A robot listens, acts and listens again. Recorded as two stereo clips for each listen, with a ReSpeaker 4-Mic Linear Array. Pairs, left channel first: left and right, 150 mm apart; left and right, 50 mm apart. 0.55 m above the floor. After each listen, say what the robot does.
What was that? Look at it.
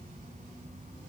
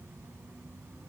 Keep listening.
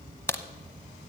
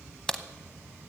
Turn 15° left.
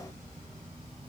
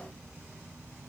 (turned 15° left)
Keep listening.
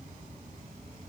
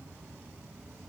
I heard a crack, but can't make it out now. It was about straight ahead or 150° left.